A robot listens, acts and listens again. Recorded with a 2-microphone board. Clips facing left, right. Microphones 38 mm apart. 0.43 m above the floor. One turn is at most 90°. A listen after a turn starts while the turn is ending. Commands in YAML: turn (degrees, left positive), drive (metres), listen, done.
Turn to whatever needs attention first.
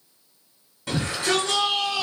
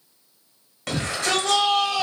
turn: -65
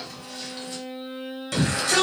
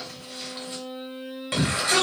turn: -30
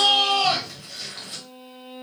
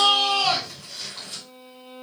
turn: 10
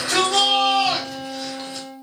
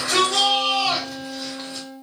done: "Facing the shout, 1 to 2 m away."